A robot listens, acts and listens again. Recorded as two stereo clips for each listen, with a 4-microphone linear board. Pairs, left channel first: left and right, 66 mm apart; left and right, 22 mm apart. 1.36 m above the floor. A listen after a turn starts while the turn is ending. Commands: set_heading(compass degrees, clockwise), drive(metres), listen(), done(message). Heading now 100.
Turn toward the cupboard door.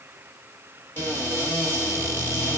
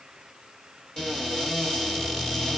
set_heading(65)
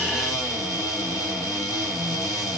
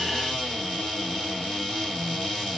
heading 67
set_heading(322)
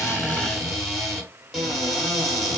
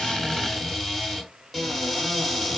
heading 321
done("Found it: a cupboard door, straight ahead, 1 to 2 m away.")